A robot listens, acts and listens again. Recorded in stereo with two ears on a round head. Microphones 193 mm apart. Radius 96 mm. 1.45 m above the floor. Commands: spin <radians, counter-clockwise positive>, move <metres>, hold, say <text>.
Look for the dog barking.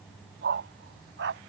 spin -0.96
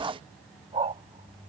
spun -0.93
spin -0.52
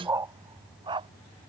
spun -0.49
spin -0.44
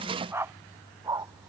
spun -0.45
spin -0.26
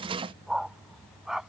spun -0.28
say Found it: a dog barking, straight ahead.